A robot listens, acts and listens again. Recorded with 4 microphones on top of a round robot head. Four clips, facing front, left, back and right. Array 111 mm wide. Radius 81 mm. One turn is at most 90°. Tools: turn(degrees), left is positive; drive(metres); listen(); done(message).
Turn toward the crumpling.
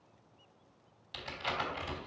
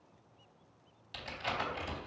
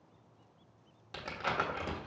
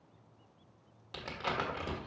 turn(degrees=-90)
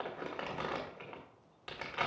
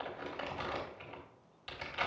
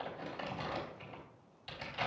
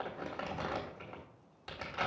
turn(degrees=-40)
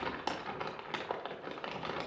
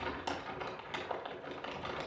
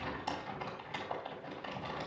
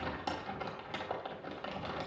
turn(degrees=-20)
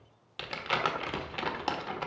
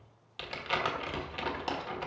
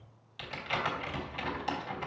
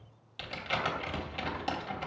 done("Facing the crumpling.")